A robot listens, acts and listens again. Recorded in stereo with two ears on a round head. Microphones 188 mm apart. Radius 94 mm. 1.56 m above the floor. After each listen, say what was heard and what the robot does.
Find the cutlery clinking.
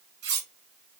The cutlery clinking: about 50° right or 130° right. Turn 50° right.
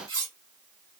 So it is at 20° right. Turn 20° right.
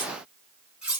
Found it: cutlery clinking, straight ahead.